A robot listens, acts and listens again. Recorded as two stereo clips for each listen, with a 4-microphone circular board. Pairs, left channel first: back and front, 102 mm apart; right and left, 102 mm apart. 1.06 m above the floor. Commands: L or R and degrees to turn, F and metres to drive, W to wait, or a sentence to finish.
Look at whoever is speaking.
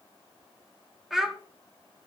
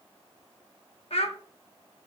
R85
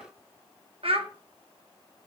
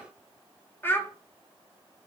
R20
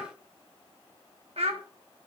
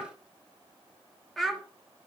Facing the child speaking.